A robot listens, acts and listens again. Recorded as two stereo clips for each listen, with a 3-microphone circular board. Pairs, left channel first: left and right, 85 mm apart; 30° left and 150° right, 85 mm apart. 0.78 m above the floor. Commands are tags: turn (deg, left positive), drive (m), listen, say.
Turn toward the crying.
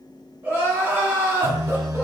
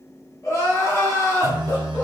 <turn deg="-25"/>
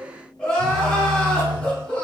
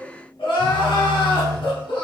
<turn deg="10"/>
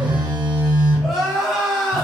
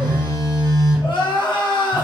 <say>Facing the crying, under 1 m away.</say>